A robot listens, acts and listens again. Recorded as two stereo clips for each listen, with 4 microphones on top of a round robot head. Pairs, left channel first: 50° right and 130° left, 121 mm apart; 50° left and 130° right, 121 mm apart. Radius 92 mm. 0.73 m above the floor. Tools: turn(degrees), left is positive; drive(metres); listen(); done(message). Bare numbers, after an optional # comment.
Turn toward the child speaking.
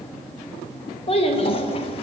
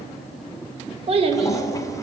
# The child speaking: 90° right.
turn(-90)
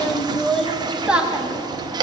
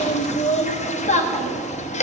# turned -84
# The child speaking is now 55° left.
turn(55)
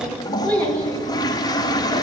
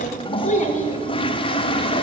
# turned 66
# The child speaking is now 30° left.
turn(30)
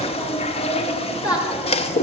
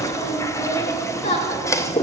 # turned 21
# The child speaking is now 10° left.
turn(10)
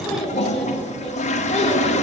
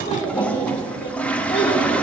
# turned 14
done("Facing the child speaking, 1 to 2 m away.")